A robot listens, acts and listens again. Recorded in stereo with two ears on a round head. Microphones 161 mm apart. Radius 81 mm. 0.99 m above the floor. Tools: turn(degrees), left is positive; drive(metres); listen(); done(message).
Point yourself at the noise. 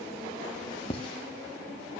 turn(degrees=35)
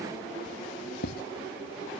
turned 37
turn(degrees=110)
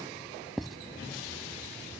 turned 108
done("Found it: writing, straight ahead.")